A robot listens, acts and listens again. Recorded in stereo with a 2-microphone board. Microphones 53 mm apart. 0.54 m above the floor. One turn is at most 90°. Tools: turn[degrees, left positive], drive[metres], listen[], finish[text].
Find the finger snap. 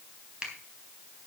Thought: The finger snap: about 20° right or 160° right.
Action: turn[-20]
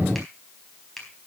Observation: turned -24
Action: finish[Facing the finger snap, 2 to 4 m away.]